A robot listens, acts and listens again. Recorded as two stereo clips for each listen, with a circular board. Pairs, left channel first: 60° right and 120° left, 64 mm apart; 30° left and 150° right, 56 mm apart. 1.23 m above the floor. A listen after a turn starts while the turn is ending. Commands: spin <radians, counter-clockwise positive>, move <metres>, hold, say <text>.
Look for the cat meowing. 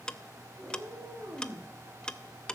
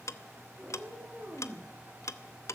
spin 2.71
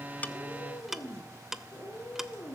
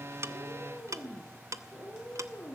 spin -0.35
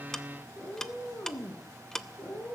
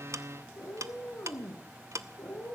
spin -0.17
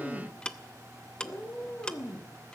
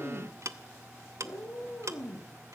say Facing the cat meowing.